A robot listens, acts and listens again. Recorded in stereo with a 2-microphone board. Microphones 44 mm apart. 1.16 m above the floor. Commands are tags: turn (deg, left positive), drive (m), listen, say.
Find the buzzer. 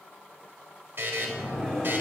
<turn deg="-50"/>
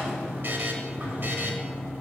<listen/>
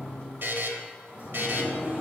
<turn deg="-65"/>
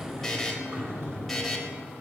<say>Facing the buzzer, 1 to 2 m away.</say>